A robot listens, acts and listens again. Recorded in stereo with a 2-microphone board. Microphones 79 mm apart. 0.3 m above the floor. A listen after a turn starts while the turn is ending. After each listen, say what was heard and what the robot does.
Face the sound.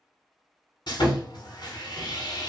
The sawing: about 65° left or 115° left. Turn 65° left.
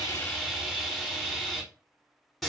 Found it: sawing, straight ahead.